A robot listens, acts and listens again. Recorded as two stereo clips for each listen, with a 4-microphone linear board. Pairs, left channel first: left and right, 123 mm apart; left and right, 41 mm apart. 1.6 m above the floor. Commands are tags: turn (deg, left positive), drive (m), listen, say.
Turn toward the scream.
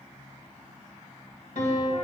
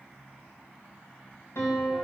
<listen/>
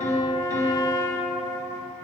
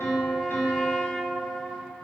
<listen/>
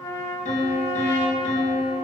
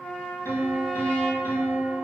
<say>I can't make out a scream to turn to.</say>